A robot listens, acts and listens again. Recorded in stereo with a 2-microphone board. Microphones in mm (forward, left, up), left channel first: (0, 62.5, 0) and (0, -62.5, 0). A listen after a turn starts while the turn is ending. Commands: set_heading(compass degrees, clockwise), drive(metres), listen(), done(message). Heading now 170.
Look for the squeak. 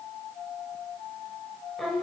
listen()
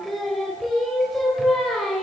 listen()
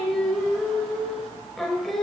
done("I can't make out a squeak, only singing.")